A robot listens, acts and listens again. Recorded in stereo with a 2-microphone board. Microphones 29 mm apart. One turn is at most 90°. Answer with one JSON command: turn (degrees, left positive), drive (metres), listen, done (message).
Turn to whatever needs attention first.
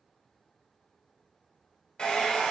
{"listen": true}
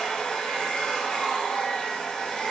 {"listen": true}
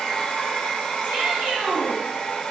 {"turn": -60}
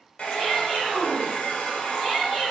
{"turn": -20}
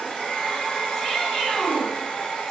{"done": "Facing the shout, 1 to 2 m away."}